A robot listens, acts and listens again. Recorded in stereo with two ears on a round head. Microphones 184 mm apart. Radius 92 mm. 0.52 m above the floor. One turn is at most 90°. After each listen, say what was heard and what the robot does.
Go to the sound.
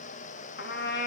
The trumpet: about 50° left or 130° left. Turn 50° left.
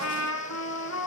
So it is at 75° left. Turn 75° left.
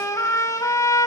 The trumpet is now 15° left. Turn 15° left.
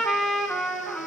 Drive 1.0 m forward.
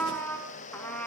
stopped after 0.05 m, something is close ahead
The trumpet is now 10° left. Turn 10° left.
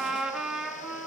Blocked. The trumpet is further on, straight ahead.